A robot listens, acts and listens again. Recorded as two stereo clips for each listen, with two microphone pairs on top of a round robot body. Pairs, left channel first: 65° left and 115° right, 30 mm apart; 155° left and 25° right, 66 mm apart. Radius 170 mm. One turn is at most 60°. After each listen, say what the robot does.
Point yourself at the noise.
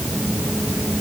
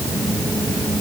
Keep listening.
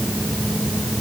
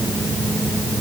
Keep listening.
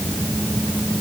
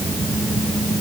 I can't make out anything.